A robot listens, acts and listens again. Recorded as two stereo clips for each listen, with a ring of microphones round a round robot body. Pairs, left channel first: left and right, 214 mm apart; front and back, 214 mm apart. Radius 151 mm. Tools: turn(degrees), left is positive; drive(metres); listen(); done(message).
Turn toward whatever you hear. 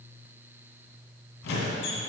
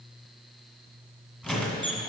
turn(degrees=85)
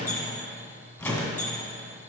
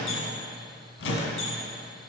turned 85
done("Facing the squeak.")